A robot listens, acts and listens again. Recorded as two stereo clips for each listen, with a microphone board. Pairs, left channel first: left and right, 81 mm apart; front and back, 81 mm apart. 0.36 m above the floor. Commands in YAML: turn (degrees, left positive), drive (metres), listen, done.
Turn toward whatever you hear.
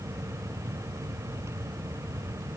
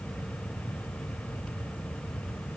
listen: true
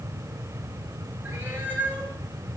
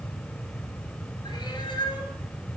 turn: -20
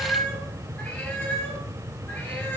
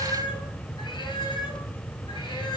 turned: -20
turn: 20
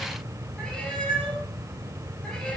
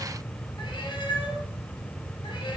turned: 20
turn: 10
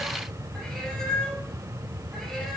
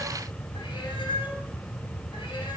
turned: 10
done: "Found it: a cat meowing, straight ahead."